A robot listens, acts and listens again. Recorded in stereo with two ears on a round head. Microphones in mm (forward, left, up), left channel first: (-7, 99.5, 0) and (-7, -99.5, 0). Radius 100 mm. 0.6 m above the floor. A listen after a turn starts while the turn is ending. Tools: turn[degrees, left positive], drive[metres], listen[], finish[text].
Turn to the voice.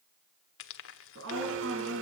Thought: The woman speaking: about 60° right or 120° right.
Action: turn[-60]
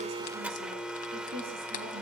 Thought: So it is at 60° right.
Action: turn[-60]
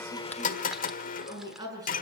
Thought: The woman speaking is now 15° right.
Action: turn[-15]
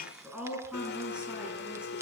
Action: finish[Found it: a woman speaking, straight ahead.]